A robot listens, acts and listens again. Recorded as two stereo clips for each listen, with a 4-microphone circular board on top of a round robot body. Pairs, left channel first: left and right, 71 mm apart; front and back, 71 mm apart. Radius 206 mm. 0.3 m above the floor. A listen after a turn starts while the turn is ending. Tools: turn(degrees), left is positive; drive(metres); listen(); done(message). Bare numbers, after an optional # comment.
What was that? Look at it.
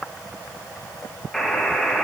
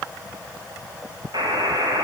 # The buzzer: 170° left.
turn(170)
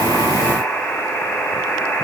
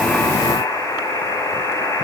# The buzzer is now 30° left.
turn(30)
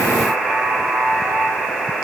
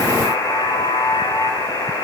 done("Found it: a buzzer, straight ahead.")